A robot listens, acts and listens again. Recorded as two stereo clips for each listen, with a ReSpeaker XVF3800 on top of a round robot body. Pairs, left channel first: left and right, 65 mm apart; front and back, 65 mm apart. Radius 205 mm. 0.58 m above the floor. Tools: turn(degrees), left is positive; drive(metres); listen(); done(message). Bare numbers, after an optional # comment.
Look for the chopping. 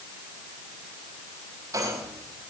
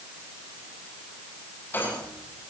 listen()
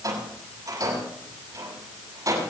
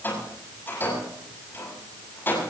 listen()
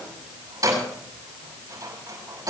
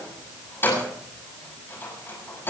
done("I can't make out chopping to turn to.")